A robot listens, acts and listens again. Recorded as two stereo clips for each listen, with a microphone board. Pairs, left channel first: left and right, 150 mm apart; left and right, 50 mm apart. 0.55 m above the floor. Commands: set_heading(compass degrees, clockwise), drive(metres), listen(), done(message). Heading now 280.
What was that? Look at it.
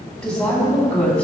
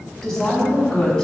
set_heading(250)
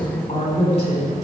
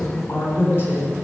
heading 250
set_heading(110)
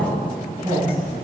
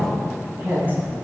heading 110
set_heading(140)
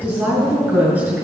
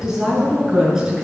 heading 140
set_heading(150)
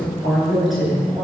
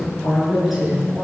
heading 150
done("Found it: a woman speaking, straight ahead.")